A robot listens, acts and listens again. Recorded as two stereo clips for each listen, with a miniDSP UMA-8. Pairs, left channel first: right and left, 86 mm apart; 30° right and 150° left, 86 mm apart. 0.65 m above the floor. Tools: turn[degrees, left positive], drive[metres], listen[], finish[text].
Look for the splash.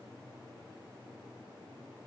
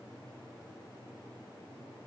Action: listen[]
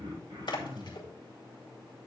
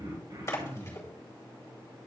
Thought: The splash: 85° right.
Action: turn[-85]
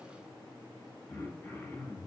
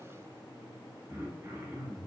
Action: finish[Facing where the splash came from. I can't hear it now.]